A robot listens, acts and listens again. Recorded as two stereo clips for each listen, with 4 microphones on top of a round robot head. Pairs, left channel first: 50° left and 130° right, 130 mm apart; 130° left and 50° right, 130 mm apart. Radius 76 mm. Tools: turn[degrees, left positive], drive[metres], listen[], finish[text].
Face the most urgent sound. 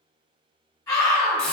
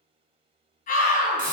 Thought: The scream: 115° left.
Action: turn[115]
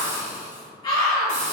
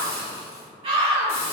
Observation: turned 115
Thought: The scream is now 10° right.
Action: turn[-10]
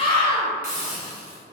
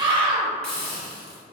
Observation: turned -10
Action: finish[Found it: a scream, straight ahead, 1 to 2 m away.]